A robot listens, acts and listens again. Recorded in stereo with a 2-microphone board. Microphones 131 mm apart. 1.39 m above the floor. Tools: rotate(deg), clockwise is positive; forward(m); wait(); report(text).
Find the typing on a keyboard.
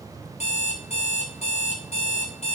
wait()
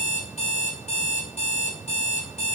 wait()
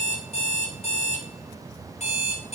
report("I can't make out typing on a keyboard, only an alarm clock.")